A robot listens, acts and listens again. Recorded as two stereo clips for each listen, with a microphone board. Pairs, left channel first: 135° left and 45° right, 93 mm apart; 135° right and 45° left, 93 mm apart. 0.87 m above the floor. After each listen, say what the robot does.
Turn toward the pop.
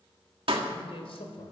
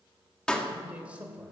Turn 55° right.
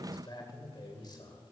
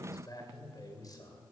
I heard a pop from this way, but can't make it out now.